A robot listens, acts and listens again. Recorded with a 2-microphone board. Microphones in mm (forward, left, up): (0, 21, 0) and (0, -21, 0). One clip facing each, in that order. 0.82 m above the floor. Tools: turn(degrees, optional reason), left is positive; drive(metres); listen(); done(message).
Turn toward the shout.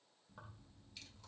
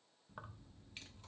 listen()
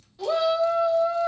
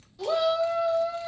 turn(degrees=20, reason="The shout: about 20° left or 160° left.")
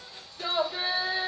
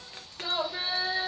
turn(degrees=140, reason="So it is at 140° left.")
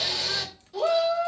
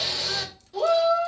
done("Found it: a shout, straight ahead, 2 to 4 m away.")